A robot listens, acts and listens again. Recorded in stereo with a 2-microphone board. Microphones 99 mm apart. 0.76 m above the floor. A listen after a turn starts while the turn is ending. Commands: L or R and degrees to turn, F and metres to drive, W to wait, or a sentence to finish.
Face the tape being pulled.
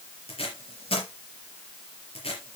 L70
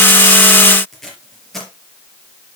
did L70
Facing the tape being pulled.